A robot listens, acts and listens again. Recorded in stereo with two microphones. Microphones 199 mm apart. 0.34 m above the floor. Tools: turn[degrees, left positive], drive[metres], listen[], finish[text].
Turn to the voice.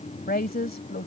Thought: The woman speaking: about 50° left or 130° left.
Action: turn[50]
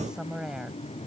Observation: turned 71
Action: finish[Facing the woman speaking.]